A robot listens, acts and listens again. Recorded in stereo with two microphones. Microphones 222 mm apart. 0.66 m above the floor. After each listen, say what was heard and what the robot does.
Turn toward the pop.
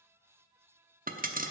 The pop: about 40° right or 140° right. Turn 40° right.
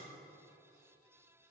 Keep listening.
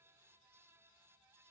I heard a pop, but can't make it out now. It was about straight ahead or 100° right.